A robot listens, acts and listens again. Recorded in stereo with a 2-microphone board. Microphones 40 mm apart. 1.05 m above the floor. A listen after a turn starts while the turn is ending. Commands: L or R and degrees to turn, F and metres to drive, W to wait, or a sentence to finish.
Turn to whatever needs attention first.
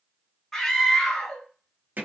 L30
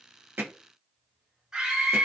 R20
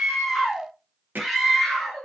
Facing the scream.